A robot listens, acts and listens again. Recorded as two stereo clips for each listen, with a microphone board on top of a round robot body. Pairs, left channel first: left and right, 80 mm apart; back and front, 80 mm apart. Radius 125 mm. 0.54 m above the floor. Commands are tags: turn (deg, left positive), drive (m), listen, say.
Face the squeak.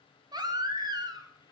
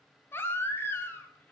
<listen/>
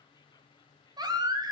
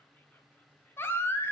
<listen/>
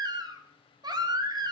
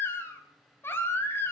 <say>I can't make out a squeak, only a baby crying.</say>